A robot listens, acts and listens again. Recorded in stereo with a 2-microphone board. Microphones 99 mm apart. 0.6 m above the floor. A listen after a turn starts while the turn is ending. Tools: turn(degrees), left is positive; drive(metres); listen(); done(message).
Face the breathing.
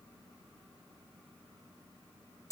listen()
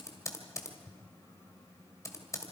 listen()
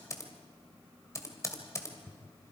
done("I can't make out breathing, only typing on a keyboard.")